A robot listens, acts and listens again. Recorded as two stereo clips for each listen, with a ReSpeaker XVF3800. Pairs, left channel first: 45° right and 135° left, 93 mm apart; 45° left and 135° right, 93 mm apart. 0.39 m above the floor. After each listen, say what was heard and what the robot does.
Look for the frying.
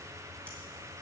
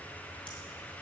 Keep listening.
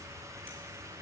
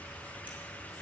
Keep listening.
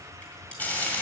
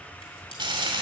The frying: 115° right. Turn 115° right.
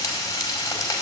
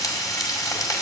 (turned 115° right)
Found it: frying, straight ahead.